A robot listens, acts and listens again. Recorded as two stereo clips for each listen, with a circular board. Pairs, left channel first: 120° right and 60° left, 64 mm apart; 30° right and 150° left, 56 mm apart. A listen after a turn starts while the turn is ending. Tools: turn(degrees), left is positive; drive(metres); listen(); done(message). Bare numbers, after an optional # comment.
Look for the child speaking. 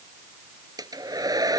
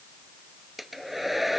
listen()
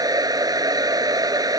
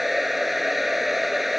listen()
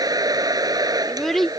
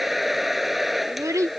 # The child speaking: 155° left.
turn(155)
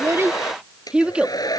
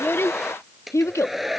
# The child speaking is now 10° right.
turn(-10)
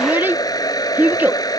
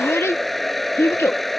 done("Facing the child speaking.")